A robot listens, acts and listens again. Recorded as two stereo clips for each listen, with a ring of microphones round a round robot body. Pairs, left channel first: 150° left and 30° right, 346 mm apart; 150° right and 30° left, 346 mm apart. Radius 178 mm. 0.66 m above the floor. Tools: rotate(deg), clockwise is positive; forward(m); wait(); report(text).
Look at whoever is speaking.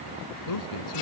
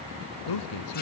rotate(175)
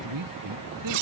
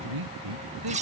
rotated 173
report("Found it: a man speaking, straight ahead.")